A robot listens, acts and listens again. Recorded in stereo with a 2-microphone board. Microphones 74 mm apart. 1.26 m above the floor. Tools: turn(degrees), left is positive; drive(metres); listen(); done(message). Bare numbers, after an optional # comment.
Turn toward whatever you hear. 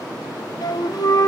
# The flute: about 55° left or 125° left.
turn(55)
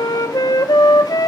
# So it is at 60° left.
turn(60)
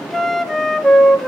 done("Found it: a flute, straight ahead.")